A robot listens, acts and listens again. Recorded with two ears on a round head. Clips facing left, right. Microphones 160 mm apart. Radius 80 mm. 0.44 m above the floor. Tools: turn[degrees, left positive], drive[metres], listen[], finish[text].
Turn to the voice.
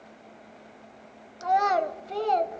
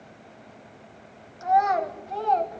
Thought: The child speaking: about 40° left or 140° left.
Action: turn[40]
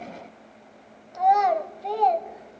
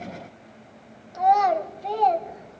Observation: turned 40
Action: finish[Found it: a child speaking, straight ahead.]